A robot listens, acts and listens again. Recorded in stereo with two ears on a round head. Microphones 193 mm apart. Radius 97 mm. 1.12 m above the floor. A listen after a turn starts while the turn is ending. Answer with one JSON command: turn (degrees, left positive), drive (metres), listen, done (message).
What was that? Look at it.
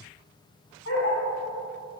{"turn": 65}
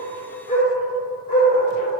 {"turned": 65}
{"turn": 45}
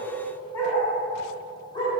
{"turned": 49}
{"turn": 20}
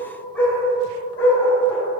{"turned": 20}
{"turn": 10}
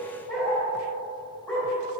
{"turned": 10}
{"done": "Facing the dog barking, 2 to 4 m away."}